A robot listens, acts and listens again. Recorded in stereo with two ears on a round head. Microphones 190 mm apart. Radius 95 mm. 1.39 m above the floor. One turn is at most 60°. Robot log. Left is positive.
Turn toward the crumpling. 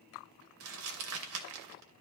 note: The crumpling: about 70° right or 110° right.
cmd yaw -60
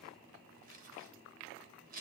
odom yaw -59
note: So it is at 40° right.
cmd yaw -40
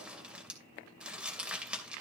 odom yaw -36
end: Facing the crumpling.